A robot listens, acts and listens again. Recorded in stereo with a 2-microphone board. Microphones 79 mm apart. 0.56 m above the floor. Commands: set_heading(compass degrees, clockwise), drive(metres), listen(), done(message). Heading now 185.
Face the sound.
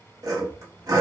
set_heading(230)
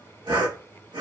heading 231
set_heading(321)
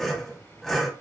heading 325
done("Facing the sawing.")